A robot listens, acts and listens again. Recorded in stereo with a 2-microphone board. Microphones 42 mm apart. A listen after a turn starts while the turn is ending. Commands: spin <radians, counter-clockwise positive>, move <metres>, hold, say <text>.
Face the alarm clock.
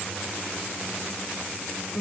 hold
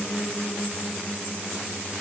hold
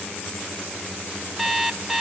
spin -0.52
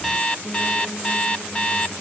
spin 0.35
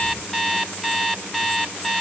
say Found it: an alarm clock, straight ahead, 1 to 2 m away.